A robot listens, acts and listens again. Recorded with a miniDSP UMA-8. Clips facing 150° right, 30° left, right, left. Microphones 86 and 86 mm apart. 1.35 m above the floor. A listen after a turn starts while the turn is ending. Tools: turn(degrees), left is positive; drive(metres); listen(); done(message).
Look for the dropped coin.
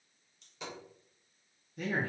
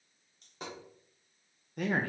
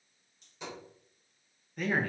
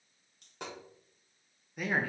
turn(degrees=70)
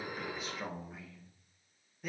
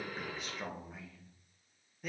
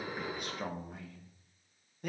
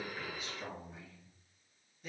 done("Facing where the dropped coin came from. I can't hear it now.")